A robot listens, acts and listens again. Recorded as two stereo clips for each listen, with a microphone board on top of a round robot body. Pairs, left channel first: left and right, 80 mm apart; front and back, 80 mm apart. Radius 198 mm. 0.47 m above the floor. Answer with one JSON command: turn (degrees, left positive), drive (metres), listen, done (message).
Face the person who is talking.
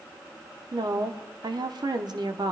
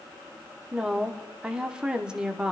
{"turn": -105}
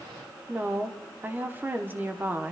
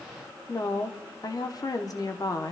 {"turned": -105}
{"turn": -30}
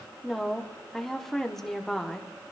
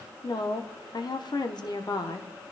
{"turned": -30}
{"done": "Found it: a woman speaking, straight ahead."}